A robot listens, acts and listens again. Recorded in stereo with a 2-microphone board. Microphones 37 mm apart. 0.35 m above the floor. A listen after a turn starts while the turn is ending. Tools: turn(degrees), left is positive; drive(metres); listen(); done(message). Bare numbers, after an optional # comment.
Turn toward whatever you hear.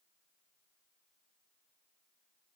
listen()
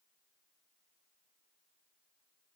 listen()
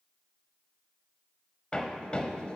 # The hammering: about 25° left or 155° left.
turn(25)
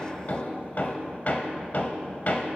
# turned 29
# So it is at 120° left.
turn(120)
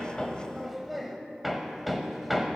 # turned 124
done("Facing the hammering, 1 to 2 m away.")